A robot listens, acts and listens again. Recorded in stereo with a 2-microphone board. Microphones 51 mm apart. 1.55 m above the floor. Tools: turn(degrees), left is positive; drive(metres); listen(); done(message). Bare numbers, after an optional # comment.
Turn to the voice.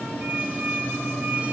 listen()
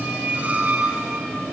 listen()
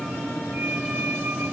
done("I can't make out anyone speaking to turn to.")